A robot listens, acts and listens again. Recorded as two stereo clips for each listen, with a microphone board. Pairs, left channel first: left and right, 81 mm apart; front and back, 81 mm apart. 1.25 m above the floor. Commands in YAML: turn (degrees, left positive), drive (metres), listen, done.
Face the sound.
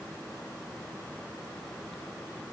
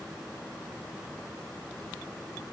listen: true
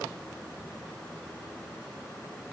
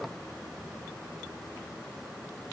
listen: true
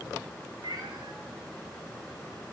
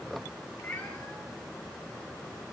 turn: -65
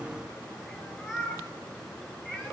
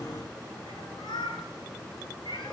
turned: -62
done: "Facing the cat meowing, over 4 m away."